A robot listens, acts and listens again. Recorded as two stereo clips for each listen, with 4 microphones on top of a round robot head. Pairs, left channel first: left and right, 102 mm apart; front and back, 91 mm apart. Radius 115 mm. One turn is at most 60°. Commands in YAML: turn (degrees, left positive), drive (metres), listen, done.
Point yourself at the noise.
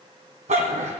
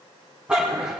turn: -60
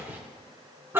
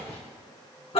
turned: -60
turn: -20
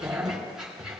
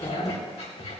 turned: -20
done: "Found it: a dog barking, straight ahead."